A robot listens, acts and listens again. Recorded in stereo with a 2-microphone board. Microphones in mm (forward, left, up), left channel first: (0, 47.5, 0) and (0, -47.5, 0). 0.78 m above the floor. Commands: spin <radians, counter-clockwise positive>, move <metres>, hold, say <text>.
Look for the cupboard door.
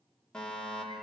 hold
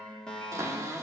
spin -0.61
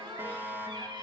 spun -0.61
spin -1.83
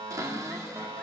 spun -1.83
spin -0.79
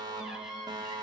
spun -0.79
spin -0.17
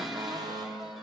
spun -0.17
say Found it: a cupboard door, straight ahead, 2 to 4 m away.